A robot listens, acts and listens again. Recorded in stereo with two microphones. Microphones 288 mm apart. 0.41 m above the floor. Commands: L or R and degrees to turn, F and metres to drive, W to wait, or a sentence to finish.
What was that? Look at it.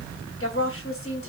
L50
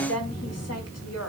L70
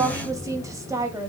R10
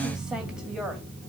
W
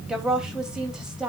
Found it: a woman speaking, straight ahead, 2 to 4 m away.